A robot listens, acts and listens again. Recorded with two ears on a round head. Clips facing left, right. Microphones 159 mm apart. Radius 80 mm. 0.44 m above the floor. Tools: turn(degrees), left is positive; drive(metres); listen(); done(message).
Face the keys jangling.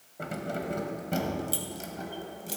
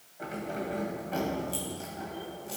turn(degrees=45)
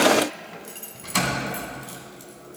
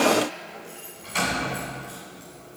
turn(degrees=115)
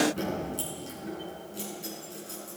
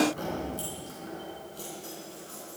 turn(degrees=25)
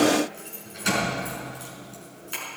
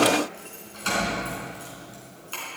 turn(degrees=15)
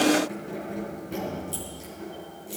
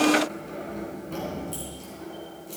done("Found it: keys jangling, straight ahead.")